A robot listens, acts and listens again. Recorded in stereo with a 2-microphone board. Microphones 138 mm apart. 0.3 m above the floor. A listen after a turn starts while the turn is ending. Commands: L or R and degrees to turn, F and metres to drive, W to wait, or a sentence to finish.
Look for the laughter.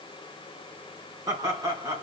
R25
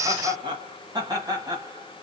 R25
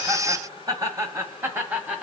R30
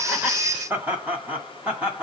R30
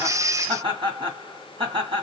R140
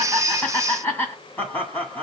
L15
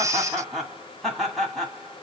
Found it: laughter, straight ahead.